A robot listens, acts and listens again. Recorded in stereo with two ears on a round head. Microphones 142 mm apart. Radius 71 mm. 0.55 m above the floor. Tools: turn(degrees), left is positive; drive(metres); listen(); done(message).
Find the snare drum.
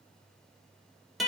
listen()
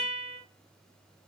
listen()
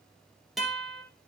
done("I can't make out a snare drum, only a guitar.")